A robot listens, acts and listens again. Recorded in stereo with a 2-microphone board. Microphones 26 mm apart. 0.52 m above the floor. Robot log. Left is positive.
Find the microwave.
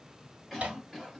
note: The microwave: about 60° right or 120° right.
cmd yaw -60
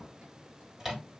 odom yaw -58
note: So it is at 15° right.
cmd yaw -15
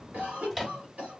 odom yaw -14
end: Facing the microwave, 1 to 2 m away.